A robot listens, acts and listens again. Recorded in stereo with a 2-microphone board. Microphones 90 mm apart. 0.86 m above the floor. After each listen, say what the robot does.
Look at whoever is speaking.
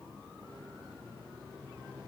Keep listening.
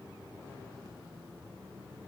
Keep listening.
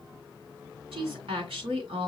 Turn 90° right.
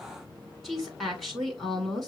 Facing the woman speaking.